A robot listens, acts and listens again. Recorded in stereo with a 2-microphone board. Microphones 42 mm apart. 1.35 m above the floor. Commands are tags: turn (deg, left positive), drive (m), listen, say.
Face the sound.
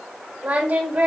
<turn deg="-50"/>
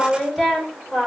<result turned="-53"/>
<say>Facing the singing.</say>